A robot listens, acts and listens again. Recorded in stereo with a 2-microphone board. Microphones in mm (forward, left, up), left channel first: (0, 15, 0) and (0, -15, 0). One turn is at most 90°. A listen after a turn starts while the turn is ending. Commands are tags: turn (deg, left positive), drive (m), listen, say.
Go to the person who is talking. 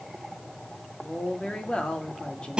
<turn deg="30"/>
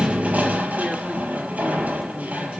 <listen/>
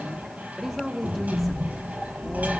<drive m="1.0"/>
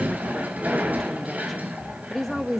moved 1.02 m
<drive m="1.0"/>
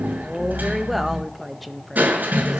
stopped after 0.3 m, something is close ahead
<say>Arrived at the woman speaking, straight ahead.</say>